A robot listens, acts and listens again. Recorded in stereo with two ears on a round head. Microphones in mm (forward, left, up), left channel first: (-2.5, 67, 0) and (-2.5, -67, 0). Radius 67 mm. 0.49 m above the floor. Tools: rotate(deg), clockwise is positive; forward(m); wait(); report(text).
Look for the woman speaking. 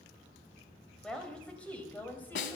rotate(-30)
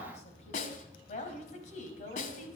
rotate(-125)
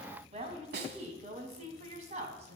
rotate(45)
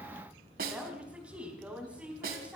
rotate(10)
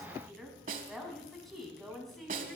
report("Found it: a woman speaking, straight ahead.")